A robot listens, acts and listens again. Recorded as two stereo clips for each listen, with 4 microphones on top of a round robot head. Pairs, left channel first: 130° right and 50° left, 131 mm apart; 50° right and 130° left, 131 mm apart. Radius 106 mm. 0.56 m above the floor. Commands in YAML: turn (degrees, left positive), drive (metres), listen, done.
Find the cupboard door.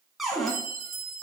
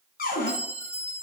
turn: -40
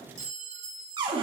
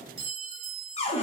done: "Found it: a cupboard door, straight ahead."